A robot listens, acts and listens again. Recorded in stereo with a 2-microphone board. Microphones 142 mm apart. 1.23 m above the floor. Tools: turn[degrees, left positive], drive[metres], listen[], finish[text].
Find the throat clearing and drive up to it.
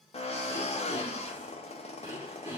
Thought: The throat clearing: about 25° right or 155° right.
Action: turn[-25]
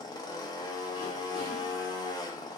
Action: listen[]
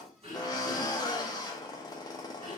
Thought: So it is at 130° right.
Action: turn[-130]
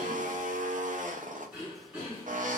Thought: The throat clearing is now 10° right.
Action: turn[-10]
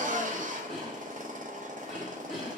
Action: drive[1.0]
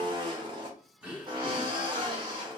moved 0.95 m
Thought: The throat clearing is now 10° right.
Action: turn[-10]
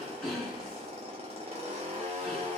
Action: drive[1.0]
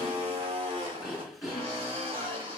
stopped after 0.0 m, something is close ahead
Action: finish[Arrived at the throat clearing, straight ahead.]